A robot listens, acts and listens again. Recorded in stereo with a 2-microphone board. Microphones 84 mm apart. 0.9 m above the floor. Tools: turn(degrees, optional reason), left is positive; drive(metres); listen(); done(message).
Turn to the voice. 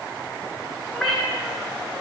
listen()
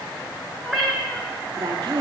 turn(degrees=-70, reason="The woman speaking: about 70° right or 110° right.")
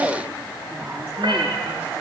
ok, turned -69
listen()
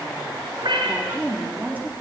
turn(degrees=-20, reason="So it is at 20° right.")
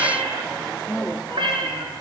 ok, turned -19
done("Found it: a woman speaking, straight ahead, 1 to 2 m away.")